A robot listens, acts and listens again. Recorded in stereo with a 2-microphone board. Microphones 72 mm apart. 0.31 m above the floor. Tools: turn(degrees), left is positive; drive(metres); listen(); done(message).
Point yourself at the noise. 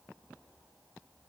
listen()
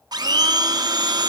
turn(degrees=-70)
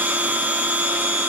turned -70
turn(degrees=-30)
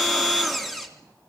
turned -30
done("Facing the blender.")